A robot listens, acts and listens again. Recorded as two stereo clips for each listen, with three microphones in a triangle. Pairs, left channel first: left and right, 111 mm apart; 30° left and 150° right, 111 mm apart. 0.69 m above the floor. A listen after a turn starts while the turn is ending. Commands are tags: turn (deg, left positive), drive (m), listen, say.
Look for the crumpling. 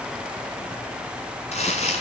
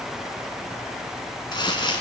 <turn deg="80"/>
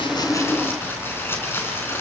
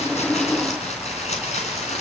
<turn deg="20"/>
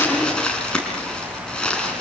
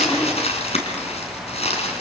<turn deg="10"/>
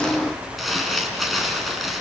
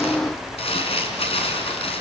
<say>Found it: crumpling, straight ahead.</say>